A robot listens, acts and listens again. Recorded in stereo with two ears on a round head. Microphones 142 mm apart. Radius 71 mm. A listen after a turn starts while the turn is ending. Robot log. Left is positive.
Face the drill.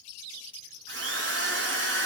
cmd yaw -90
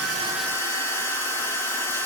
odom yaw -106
note: So it is at 15° left.
cmd yaw +15
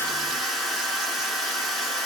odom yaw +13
end: Found it: a drill, straight ahead, over 4 m away.